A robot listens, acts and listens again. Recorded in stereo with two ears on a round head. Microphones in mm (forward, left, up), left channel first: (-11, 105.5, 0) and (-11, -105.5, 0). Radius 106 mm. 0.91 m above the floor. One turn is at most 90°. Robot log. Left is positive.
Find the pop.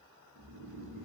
cmd idle
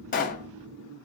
note: The pop: about 35° left or 145° left.
cmd yaw +35
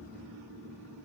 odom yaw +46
cmd idle
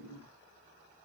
end: I heard a pop, but can't make it out now. It was about 10° right or 100° left.